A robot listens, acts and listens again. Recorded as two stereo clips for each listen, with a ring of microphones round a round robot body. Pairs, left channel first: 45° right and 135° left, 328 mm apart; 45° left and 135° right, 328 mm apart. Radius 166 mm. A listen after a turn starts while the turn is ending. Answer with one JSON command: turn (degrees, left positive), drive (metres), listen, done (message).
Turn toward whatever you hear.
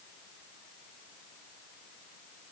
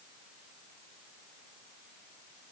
{"listen": true}
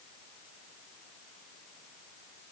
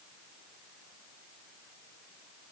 {"listen": true}
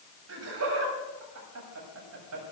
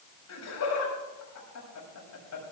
{"turn": 90}
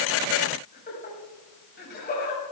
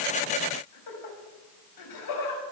{"turn": 15}
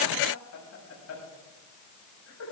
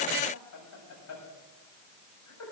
{"done": "Found it: laughter, straight ahead."}